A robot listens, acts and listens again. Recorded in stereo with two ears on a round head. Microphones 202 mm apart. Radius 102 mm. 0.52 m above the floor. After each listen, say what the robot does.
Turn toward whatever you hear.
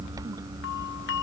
Turn 60° left.
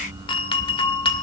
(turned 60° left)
Turn 25° left.
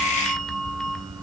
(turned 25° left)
Found it: a doorbell, straight ahead, 2 to 4 m away.